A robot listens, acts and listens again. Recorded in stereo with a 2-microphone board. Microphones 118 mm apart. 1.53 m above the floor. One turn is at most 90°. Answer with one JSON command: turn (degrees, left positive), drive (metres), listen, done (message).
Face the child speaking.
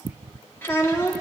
{"turn": 20}
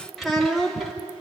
{"done": "Found it: a child speaking, straight ahead."}